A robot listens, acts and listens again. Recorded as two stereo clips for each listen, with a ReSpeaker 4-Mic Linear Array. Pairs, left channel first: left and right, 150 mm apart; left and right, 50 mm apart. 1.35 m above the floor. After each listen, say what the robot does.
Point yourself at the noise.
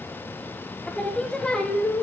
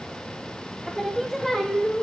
Turn 30° left.
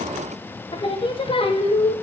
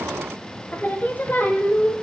Turn 145° left.
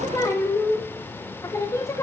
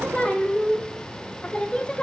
Turn 20° left.
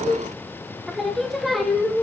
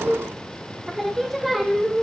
Facing the singing, under 1 m away.